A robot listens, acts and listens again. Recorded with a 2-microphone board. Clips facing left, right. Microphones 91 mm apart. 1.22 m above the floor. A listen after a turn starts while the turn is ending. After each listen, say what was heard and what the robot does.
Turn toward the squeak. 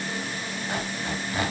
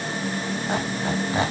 The squeak: about 25° right or 155° right. Turn 25° right.
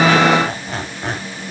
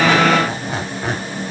Found it: a squeak, straight ahead.